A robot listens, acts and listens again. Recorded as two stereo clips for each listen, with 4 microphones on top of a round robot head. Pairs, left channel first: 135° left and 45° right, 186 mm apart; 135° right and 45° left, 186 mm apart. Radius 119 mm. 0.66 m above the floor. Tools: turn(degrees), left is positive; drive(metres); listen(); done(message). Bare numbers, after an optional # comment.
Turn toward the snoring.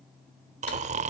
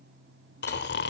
# The snoring: 100° right.
turn(-100)
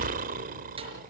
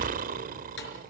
done("Found it: snoring, straight ahead.")